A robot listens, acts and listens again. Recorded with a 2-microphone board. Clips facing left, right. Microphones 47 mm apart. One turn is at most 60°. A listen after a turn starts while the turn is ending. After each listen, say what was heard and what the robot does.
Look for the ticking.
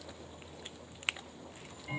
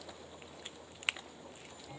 The ticking: about 70° left or 110° left. Turn 60° left.
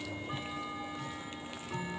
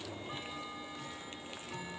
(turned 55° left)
So it is at 15° left. Turn 15° left.
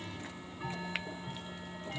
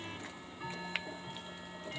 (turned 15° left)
Found it: ticking, straight ahead.